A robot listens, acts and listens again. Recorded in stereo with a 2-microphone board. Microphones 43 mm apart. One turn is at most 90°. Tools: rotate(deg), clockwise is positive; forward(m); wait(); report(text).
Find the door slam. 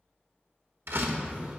rotate(65)
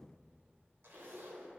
wait()
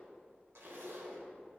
report("I heard a door slam, but can't make it out now. It was about straight ahead or 50° right.")